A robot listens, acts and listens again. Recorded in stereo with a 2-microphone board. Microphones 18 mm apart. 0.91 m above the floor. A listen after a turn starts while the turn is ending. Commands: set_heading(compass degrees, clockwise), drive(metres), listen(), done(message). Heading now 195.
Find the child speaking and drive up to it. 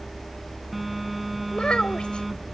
set_heading(135)
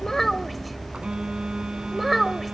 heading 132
drive(1.0)
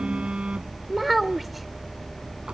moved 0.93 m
set_heading(142)
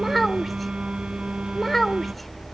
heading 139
drive(1.0)
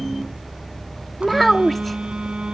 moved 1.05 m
drive(1.0)
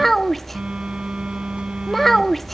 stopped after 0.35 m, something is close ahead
set_heading(129)
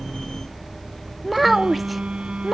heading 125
done("Arrived at the child speaking, straight ahead.")